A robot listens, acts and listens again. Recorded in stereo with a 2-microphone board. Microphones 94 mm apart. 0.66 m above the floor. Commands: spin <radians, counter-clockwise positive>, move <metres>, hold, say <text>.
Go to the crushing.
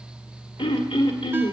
hold
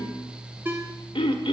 hold
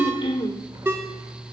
say I can't make out crushing to turn to.